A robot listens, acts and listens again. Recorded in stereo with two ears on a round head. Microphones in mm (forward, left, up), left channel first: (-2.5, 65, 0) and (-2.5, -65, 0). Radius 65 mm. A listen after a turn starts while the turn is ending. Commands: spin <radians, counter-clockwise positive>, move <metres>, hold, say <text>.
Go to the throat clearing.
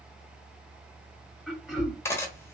spin 0.52
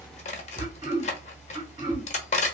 spin -0.52
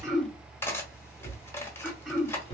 move 1.0
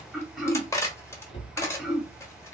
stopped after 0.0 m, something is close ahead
say Something is in my way. I am facing the throat clearing but have not reached it.